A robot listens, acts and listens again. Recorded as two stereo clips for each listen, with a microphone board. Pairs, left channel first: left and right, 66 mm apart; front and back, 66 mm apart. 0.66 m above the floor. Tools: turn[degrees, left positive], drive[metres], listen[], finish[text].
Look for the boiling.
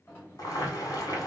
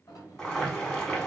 Thought: The boiling: 75° left.
Action: turn[75]
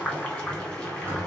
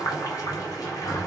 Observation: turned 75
Thought: The boiling is now 10° left.
Action: turn[10]
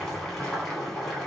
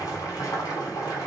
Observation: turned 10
Action: finish[Found it: boiling, straight ahead, 1 to 2 m away.]